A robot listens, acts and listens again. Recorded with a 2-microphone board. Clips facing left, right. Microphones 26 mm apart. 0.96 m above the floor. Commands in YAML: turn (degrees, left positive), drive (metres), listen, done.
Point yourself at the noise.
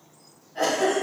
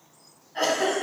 turn: -40
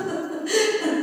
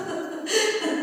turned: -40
done: "Facing the giggle, 1 to 2 m away."